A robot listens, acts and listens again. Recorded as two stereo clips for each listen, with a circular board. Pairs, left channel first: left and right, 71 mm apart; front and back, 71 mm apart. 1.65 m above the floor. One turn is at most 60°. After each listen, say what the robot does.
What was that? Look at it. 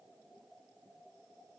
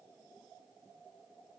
Keep listening.
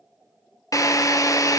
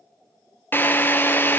Turn 60° left.
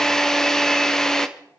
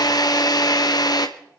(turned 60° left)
Facing the drill, 1 to 2 m away.